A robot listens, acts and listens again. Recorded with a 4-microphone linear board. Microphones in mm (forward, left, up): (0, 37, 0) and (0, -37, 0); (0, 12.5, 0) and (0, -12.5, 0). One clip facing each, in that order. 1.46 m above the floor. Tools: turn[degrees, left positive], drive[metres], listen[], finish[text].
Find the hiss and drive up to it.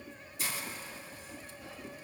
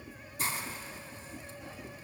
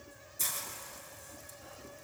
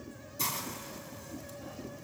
Thought: The hiss: about 40° right or 140° right.
Action: turn[-40]
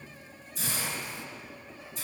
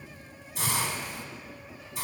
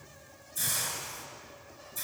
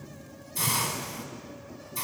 Thought: So it is at 100° right.
Action: turn[-100]
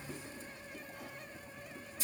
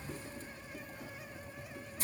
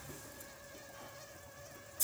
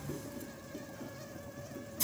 Thought: The hiss is now 40° right.
Action: turn[-40]
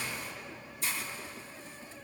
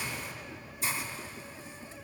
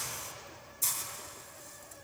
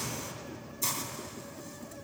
Thought: The hiss is now 15° right.
Action: turn[-15]
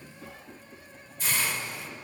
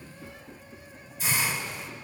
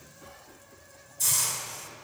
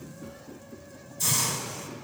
Action: drive[1.0]
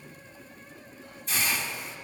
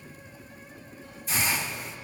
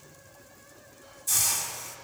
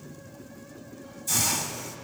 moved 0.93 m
Action: drive[1.0]
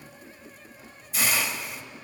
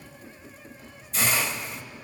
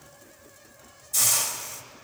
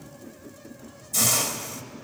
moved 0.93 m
Action: drive[1.0]
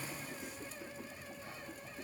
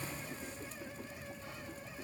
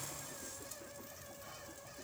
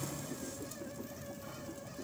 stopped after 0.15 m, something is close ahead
Action: listen[]
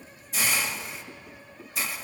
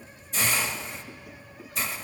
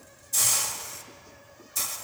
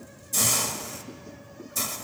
Action: finish[I am next to the hiss.]